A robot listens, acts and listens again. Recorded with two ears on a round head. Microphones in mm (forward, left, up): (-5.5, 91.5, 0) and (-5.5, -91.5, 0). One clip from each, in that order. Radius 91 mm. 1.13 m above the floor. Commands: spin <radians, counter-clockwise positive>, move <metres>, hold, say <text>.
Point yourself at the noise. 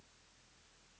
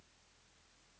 hold
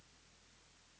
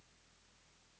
hold
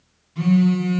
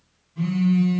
spin 1.22
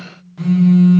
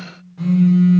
spin 0.61
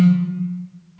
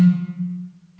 spin -0.17
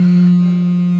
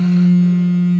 say Facing the phone buzzing.